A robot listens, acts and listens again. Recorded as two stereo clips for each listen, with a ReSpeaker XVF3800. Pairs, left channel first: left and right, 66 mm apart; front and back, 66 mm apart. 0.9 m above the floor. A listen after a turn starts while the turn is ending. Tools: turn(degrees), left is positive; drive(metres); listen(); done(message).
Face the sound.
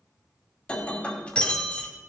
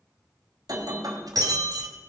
turn(degrees=160)
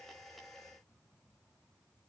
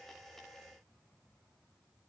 done("Facing where the breaking glass came from. I can't hear it now.")